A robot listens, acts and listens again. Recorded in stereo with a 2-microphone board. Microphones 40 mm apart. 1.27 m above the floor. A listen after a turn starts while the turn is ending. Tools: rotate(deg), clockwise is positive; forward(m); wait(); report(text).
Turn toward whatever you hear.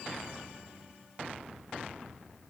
wait()
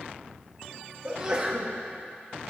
rotate(20)
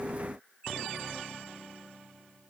wait()
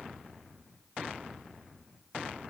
report("I heard a sneeze, but can't make it out now. It was about straight ahead or 140° right.")